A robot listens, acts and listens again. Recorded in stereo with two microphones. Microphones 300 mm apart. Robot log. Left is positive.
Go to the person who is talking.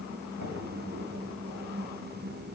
cmd idle
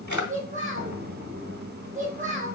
note: The child speaking: about 25° right or 155° right.
cmd yaw -25
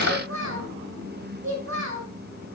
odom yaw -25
note: So it is at 130° right.
cmd yaw -130
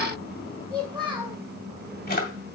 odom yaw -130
note: The child speaking is now 20° right.
cmd yaw -20
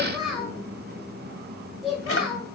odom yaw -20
cmd fwd 1.0
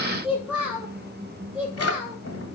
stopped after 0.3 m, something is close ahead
end: Blocked. The child speaking is further on, straight ahead.